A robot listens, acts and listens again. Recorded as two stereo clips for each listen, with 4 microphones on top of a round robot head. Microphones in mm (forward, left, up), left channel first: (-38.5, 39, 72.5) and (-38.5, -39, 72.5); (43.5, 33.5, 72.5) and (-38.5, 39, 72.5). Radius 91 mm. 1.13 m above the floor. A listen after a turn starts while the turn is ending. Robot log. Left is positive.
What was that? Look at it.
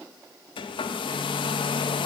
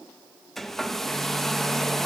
note: The hair dryer: 80° left.
cmd yaw +80
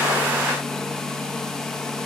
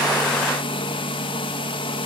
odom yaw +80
end: Facing the hair dryer.